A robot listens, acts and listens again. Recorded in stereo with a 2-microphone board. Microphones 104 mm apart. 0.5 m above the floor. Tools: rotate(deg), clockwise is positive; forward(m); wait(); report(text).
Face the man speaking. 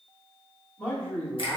rotate(-20)
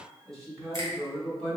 rotate(-30)
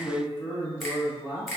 rotate(20)
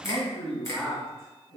report("Facing the man speaking, 2 to 4 m away.")